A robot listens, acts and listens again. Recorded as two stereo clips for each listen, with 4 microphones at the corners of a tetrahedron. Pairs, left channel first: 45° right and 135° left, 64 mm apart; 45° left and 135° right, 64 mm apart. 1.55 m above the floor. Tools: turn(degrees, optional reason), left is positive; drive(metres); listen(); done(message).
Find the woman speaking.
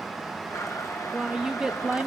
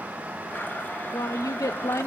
turn(degrees=65, reason="The woman speaking: 65° left.")
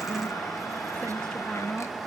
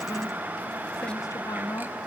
turn(degrees=40, reason="The woman speaking is now 40° left.")
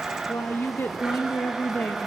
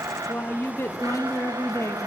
turn(degrees=10, reason="The woman speaking is now 10° left.")
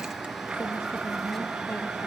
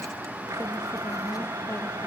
listen()
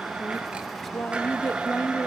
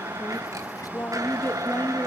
done("Facing the woman speaking, 1 to 2 m away.")